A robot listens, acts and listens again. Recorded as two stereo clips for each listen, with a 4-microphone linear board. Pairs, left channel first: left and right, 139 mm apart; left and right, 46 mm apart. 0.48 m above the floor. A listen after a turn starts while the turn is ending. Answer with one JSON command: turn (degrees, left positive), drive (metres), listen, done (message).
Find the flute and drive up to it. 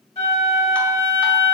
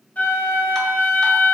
{"turn": 50}
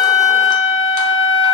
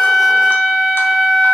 {"drive": 1.0}
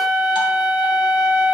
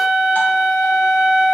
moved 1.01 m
{"drive": 1.0}
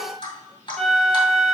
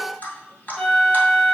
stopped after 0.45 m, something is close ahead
{"done": "I am next to the flute."}